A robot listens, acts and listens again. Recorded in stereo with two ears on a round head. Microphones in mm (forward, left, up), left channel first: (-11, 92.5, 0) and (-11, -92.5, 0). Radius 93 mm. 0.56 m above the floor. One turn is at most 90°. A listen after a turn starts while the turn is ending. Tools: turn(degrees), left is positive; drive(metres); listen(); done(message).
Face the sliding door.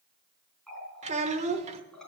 listen()
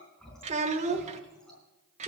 listen()
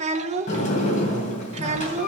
turn(degrees=40)
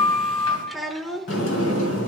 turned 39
turn(degrees=90)
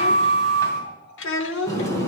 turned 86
turn(degrees=15)
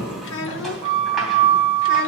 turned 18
done("Found it: a sliding door, straight ahead.")